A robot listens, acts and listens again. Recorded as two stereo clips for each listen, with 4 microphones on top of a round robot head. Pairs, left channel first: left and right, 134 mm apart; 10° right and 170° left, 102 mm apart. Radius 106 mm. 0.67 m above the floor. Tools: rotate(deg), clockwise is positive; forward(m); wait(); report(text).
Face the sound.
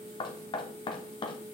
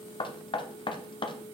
rotate(-30)
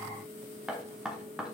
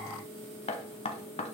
report("Found it: knocking, straight ahead.")